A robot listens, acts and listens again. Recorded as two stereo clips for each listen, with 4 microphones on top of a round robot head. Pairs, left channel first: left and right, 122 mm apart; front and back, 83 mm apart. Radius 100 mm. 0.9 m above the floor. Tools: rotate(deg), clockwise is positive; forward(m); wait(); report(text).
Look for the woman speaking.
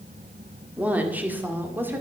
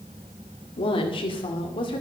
rotate(15)
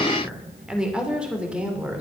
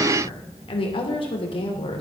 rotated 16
rotate(10)
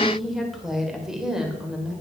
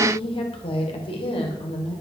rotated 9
report("Facing the woman speaking, 2 to 4 m away.")